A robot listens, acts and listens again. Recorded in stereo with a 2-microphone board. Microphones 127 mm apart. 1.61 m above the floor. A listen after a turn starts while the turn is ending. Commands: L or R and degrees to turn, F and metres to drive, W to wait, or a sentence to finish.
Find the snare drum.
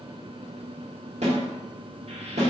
R60
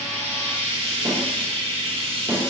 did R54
R25
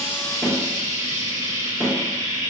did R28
Facing the snare drum.